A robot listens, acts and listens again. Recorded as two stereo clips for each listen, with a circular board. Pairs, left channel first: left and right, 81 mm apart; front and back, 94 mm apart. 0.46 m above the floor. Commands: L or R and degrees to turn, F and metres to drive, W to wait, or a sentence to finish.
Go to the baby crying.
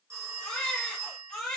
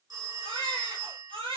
L170
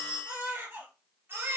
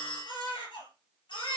R25
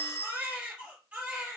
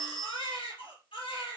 R15
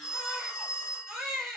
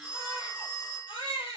F1.0
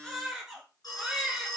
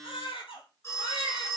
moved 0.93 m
F1.0
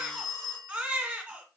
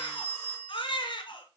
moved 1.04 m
R15
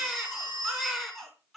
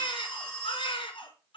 F1.0
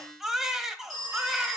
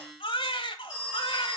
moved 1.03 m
F1.0
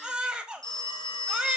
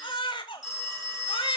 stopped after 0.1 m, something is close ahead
R15
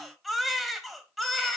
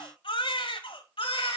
Arrived at the baby crying, straight ahead.